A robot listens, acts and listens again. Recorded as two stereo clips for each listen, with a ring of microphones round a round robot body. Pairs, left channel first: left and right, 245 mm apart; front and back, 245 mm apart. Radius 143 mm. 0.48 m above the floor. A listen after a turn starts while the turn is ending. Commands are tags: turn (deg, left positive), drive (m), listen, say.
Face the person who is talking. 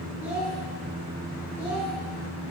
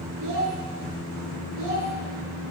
<turn deg="-170"/>
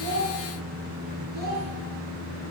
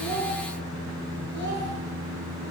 <turn deg="-35"/>
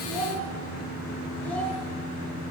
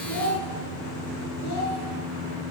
<say>Facing the child speaking.</say>